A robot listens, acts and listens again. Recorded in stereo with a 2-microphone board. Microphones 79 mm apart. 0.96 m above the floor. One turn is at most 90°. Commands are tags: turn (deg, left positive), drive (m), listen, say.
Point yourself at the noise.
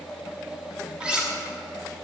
<turn deg="-30"/>
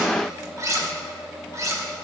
<turn deg="-90"/>
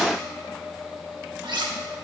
<turn deg="-90"/>
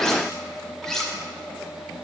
<say>Found it: cutlery clinking, straight ahead, 1 to 2 m away.</say>